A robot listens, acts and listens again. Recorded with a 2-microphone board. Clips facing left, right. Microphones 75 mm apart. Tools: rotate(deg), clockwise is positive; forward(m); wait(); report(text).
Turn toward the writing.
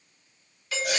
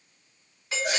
wait()
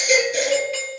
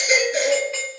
wait()
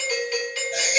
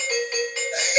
report("I can't make out writing, only a doorbell and a baby crying.")